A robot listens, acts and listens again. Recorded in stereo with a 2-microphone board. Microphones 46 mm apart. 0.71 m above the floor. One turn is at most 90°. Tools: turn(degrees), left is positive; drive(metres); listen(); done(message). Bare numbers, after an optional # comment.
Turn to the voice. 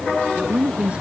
# The woman speaking: about 25° right or 155° right.
turn(-25)
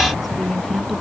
done("Facing the woman speaking.")